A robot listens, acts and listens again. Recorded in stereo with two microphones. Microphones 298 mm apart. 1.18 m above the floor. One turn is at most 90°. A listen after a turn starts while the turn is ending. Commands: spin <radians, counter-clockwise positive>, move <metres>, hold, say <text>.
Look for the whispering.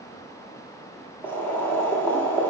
hold
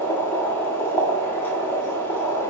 hold
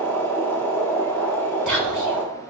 spin -1.57
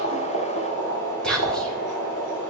say Found it: whispering, straight ahead, 2 to 4 m away.